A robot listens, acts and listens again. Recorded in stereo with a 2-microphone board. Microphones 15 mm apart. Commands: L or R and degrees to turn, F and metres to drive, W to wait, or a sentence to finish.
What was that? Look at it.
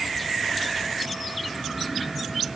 W
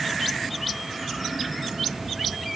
W
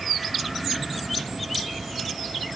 I can't make out anything to turn to.